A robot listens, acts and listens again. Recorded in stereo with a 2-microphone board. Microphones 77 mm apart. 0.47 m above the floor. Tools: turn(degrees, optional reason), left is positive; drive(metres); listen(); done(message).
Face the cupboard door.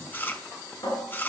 turn(degrees=90)
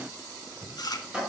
turn(degrees=-15, reason="So it is at 15° right.")
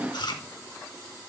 listen()
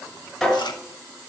done("Facing the cupboard door.")